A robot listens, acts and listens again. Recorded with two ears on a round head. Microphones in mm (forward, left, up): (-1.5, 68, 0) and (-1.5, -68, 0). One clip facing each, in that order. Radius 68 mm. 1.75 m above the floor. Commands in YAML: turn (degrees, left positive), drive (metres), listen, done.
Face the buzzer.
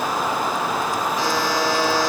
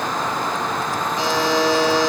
turn: -20
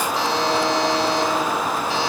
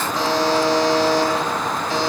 turn: -140
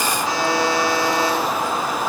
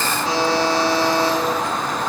turn: -25
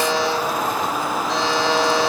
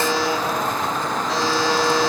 done: "Facing the buzzer."